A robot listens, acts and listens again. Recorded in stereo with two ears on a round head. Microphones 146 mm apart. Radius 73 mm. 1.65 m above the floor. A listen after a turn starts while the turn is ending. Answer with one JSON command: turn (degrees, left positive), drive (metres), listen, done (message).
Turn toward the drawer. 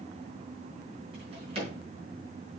{"turn": -35}
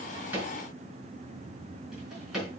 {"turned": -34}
{"done": "Facing the drawer."}